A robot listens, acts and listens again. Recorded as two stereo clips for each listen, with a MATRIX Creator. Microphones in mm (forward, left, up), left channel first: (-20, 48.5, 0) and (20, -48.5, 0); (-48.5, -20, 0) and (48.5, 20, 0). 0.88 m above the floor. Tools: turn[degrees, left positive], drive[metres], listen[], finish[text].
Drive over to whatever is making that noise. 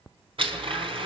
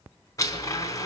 Thought: The blender: 100° right.
Action: turn[-100]
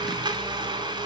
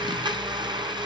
Thought: The blender is now 20° right.
Action: turn[-20]
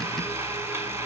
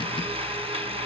Action: drive[1.0]
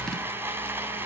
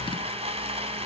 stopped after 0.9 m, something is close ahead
Action: finish[Blocked. The blender is further on, straight ahead.]